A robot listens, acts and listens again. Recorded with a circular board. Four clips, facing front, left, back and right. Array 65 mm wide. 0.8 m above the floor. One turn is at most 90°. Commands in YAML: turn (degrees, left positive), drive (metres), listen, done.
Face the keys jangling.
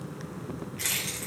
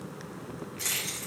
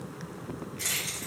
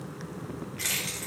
turn: -50
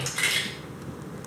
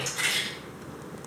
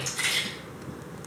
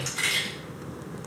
done: "Facing the keys jangling, 2 to 4 m away."